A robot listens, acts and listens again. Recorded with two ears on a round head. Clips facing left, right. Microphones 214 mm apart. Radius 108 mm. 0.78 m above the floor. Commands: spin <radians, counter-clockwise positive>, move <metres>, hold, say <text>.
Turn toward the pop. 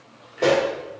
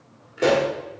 spin -0.52
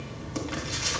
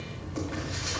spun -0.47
hold
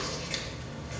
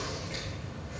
say I heard a pop, but can't make it out now. It was about 15° left or 140° right.